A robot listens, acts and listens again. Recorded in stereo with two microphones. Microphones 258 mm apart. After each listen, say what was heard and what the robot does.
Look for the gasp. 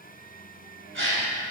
The gasp: about 50° right or 130° right. Turn 50° right.
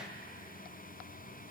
Keep listening.
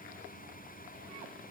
I heard a gasp, but can't make it out now. It was about straight ahead or 80° right.